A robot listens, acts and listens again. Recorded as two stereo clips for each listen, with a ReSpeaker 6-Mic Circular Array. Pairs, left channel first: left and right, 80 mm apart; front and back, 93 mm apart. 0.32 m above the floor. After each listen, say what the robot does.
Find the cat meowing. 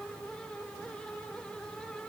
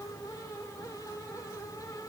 Keep listening.
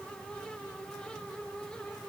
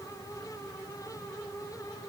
Keep listening.
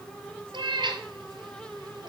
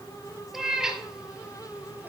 Turn 95° right.
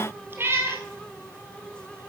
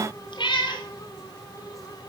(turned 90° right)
Turn 30° right.
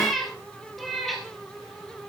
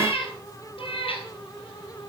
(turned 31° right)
Facing the cat meowing, 2 to 4 m away.